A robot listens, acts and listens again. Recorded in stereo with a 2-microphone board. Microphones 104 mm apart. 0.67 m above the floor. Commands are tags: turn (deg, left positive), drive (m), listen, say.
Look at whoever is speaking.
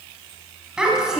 <turn deg="-30"/>
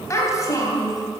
<turn deg="35"/>
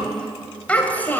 <turn deg="20"/>
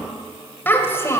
<turn deg="25"/>
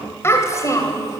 <turn deg="30"/>
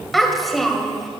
<say>Found it: a child speaking, straight ahead, 2 to 4 m away.</say>